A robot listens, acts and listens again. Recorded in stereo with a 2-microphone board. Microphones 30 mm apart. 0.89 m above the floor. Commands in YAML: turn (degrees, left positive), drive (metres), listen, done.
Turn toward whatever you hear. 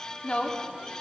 turn: 45
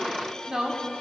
turn: -15
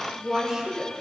turn: -15
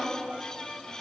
done: "Found it: a woman speaking, straight ahead, 2 to 4 m away."